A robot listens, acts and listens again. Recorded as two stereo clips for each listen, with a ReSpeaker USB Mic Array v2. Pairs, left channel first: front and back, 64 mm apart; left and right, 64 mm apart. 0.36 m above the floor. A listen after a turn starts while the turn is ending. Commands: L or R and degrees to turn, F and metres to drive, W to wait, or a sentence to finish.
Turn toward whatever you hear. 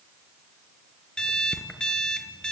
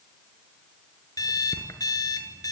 L80
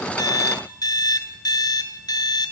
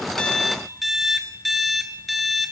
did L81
Found it: an alarm clock, straight ahead.